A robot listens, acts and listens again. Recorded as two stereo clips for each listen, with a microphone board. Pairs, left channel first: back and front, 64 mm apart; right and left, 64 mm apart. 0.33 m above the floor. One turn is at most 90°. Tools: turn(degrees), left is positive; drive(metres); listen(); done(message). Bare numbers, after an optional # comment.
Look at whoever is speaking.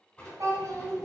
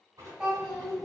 done("Facing the child speaking, 1 to 2 m away.")